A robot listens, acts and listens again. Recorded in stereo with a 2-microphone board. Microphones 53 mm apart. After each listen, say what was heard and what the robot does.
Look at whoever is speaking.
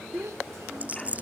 The child speaking: about 75° right or 105° right. Turn 75° right.
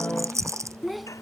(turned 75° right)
Found it: a child speaking, straight ahead.